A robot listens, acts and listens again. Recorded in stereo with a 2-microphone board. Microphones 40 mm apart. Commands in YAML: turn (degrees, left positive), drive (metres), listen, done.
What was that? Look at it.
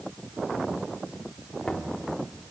turn: 30
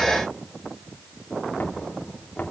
turn: 140
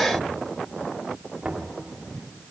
turn: -25
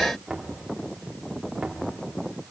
turn: -10
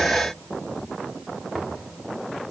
done: "Facing the knocking."